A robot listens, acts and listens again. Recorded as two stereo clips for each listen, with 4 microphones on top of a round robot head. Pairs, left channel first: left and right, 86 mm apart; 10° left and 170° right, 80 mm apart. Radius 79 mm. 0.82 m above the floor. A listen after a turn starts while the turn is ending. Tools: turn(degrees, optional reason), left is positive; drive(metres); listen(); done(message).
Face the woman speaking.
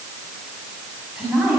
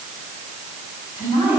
turn(degrees=-10, reason="The woman speaking: 10° right.")
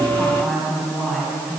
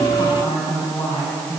done("Found it: a woman speaking, straight ahead, over 4 m away.")